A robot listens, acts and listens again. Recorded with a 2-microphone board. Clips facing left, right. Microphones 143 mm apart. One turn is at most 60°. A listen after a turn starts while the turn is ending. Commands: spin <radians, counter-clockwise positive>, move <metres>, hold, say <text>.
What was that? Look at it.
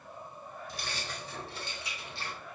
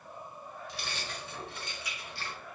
spin 0.35
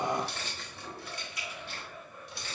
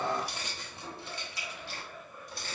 spin -0.79
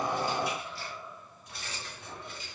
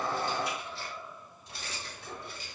spin -0.61
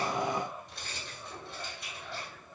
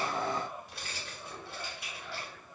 say Found it: keys jangling, straight ahead, 2 to 4 m away.